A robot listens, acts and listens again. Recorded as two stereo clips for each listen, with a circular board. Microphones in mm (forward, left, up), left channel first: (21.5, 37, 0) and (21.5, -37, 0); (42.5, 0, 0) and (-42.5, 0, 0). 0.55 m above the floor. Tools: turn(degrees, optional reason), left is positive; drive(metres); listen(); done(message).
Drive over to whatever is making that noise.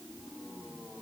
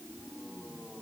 listen()
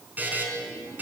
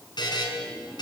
turn(degrees=-25, reason="The buzzer: 25° right.")
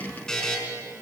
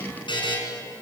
turn(degrees=10, reason="The buzzer is now 10° left.")
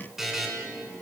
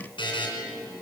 drive(metres=1.0)
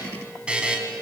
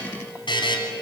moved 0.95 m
turn(degrees=-15, reason="The buzzer is now 15° right.")
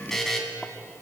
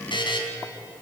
drive(metres=1.0)
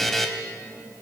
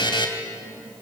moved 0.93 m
drive(metres=1.0)
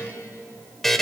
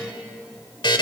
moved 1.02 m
drive(metres=1.0)
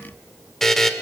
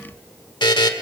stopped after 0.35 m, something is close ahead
done("I am next to the buzzer.")